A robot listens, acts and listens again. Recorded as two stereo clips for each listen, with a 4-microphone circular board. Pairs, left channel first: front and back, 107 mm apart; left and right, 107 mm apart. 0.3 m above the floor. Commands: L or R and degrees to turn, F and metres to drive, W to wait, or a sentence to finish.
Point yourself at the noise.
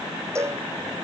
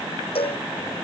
L115
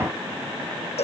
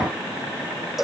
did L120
Found it: a cowbell, straight ahead.